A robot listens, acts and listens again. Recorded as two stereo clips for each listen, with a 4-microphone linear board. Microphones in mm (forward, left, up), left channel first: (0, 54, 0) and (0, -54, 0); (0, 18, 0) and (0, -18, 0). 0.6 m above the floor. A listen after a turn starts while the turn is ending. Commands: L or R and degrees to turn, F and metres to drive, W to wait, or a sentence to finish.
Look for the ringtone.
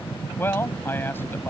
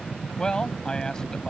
W
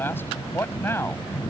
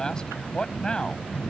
W
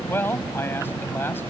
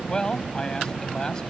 I can't make out a ringtone, only a man speaking.